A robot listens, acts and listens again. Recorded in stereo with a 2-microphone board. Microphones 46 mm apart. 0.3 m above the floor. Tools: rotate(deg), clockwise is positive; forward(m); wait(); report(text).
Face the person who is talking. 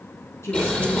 rotate(-70)
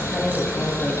wait()
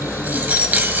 wait()
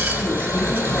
report("I heard a woman speaking, but can't make it out now. It was about straight ahead or 40° left.")